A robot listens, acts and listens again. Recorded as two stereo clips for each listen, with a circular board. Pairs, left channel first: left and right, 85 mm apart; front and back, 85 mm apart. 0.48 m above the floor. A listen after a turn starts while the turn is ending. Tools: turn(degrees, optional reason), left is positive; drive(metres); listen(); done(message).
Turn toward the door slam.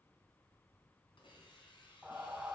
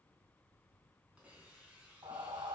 listen()
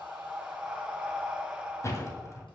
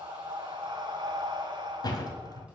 turn(degrees=35, reason="The door slam: 35° left.")
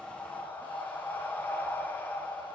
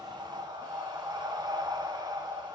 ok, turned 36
done("Facing where the door slam came from. I can't hear it now.")